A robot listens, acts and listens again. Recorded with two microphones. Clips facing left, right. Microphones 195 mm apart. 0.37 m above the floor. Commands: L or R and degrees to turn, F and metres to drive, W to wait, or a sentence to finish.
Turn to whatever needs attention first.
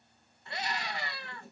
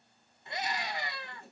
R20
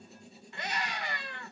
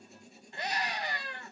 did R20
R140
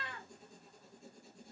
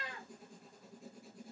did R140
R45
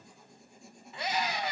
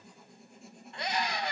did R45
Found it: a scream, straight ahead.